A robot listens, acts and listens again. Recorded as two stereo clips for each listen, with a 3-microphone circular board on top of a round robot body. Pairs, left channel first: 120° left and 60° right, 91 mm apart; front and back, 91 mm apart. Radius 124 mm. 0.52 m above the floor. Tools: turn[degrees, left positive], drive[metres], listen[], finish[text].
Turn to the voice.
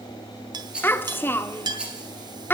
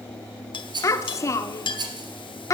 Thought: The child speaking: 55° left.
Action: turn[55]
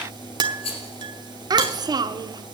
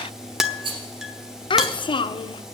Thought: The child speaking is now 20° right.
Action: turn[-20]
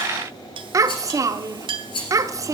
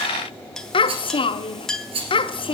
Action: finish[Found it: a child speaking, straight ahead.]